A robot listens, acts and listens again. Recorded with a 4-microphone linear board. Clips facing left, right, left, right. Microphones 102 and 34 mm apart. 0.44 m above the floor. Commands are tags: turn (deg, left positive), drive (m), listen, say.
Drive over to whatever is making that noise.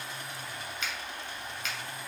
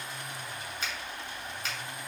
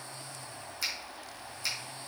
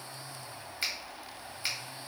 <turn deg="-35"/>
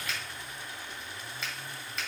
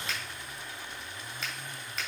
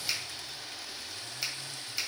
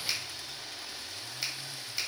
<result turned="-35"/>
<drive m="1.0"/>
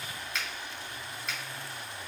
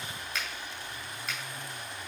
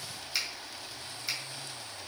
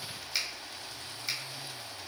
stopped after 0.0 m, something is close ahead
<say>Blocked. The finger snap is further on, straight ahead.</say>